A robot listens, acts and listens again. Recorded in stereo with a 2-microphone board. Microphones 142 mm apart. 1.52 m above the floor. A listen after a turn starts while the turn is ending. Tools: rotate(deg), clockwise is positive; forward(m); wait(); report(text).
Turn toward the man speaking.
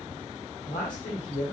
rotate(-90)
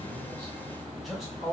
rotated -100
report("Found it: a man speaking, straight ahead.")